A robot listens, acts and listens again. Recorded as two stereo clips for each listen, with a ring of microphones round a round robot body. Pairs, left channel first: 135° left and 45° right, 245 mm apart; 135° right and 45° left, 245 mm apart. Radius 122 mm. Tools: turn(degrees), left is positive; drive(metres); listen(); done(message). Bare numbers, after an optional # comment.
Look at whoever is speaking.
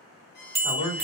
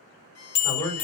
# The man speaking: 145° left.
turn(145)
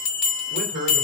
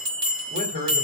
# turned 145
done("Facing the man speaking, 1 to 2 m away.")